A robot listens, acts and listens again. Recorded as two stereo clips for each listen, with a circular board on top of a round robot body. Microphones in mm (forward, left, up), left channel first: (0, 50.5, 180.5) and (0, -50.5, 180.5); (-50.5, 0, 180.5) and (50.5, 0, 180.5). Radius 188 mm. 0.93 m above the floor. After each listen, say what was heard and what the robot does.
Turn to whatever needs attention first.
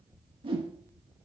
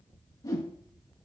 Keep listening.
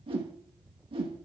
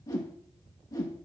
Keep listening.
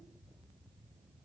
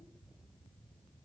I can't make out anything urgent, only a whoosh.